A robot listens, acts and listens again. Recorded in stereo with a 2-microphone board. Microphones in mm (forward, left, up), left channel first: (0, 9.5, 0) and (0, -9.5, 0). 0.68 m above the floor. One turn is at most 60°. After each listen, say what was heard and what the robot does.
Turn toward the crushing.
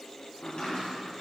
Keep listening.
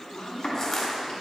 The crushing: about 30° left or 150° left. Turn 30° left.
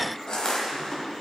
So it is at 120° left. Turn 60° left.
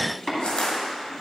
The crushing is now 95° left. Turn 60° left.
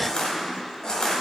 The crushing is now 50° left. Turn 50° left.
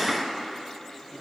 Keep listening.
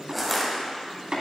Facing the crushing, 1 to 2 m away.